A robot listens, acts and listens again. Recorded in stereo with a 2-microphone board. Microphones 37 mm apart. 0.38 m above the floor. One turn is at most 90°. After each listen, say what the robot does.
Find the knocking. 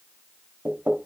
Turn 60° right.
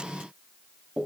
Turn 25° right.
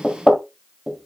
Facing the knocking.